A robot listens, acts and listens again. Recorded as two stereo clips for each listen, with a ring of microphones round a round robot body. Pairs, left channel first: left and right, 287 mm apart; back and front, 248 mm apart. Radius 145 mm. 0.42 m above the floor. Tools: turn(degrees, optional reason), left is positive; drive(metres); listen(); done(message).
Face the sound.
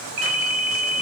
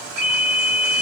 turn(degrees=-90, reason="The ringtone: 90° right.")
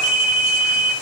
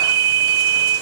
turn(degrees=-25, reason="The ringtone is now 25° right.")
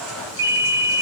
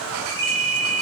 turn(degrees=-10, reason="The ringtone is now 10° right.")
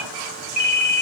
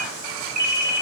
done("Found it: a ringtone, straight ahead.")